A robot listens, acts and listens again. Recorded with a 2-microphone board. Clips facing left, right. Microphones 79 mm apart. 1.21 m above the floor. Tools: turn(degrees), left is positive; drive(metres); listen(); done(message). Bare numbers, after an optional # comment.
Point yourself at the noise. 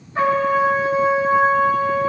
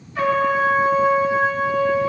# The trumpet: about 35° left or 145° left.
turn(35)
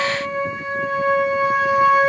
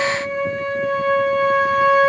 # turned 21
# So it is at 15° left.
turn(15)
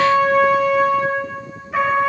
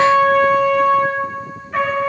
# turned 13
done("Found it: a trumpet, straight ahead.")